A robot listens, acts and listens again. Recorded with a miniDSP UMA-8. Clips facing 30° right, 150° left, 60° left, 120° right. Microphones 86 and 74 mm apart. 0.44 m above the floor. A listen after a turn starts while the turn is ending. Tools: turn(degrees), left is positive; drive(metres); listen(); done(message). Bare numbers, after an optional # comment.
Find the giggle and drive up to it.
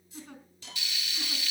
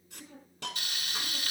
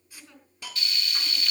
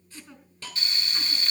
# The giggle: 40° right.
turn(-40)
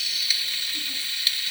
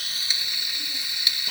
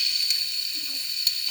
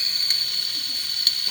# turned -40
listen()
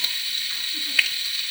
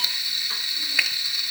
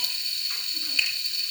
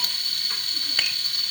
listen()
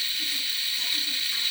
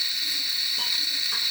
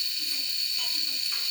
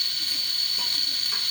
done("I heard a giggle from this way, but can't make it out now. I did not reach it.")